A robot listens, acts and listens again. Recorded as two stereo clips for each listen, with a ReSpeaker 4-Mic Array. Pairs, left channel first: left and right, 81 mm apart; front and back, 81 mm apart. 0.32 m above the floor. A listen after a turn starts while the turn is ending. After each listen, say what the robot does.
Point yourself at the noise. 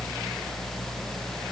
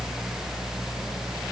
Keep listening.
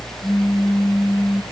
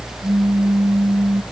Turn 175° right.
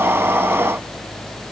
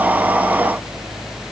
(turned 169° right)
Facing where the pop came from. I can't hear it now.